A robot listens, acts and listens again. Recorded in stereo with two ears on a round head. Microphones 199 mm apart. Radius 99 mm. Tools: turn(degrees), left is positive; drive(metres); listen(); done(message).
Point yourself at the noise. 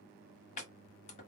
turn(degrees=35)
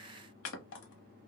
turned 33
turn(degrees=110)
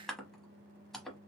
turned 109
done("Facing the chopping.")